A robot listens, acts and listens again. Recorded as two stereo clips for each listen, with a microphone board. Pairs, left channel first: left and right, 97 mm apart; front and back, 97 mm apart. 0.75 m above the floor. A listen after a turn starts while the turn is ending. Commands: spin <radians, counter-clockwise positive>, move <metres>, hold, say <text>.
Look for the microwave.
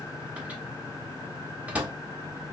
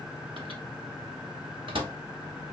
spin -2.88
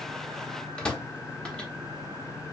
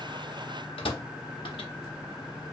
spin 0.17
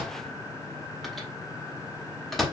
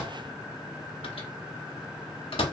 say Found it: a microwave, straight ahead.